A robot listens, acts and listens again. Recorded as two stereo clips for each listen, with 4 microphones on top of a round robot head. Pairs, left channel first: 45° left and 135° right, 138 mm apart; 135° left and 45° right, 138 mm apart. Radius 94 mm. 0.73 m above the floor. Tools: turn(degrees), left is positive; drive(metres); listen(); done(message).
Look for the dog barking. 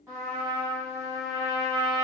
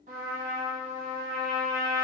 listen()
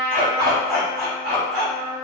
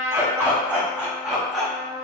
turn(degrees=-135)
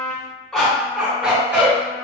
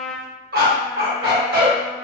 turn(degrees=-55)
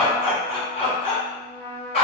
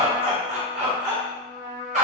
done("Found it: a dog barking, straight ahead, 1 to 2 m away.")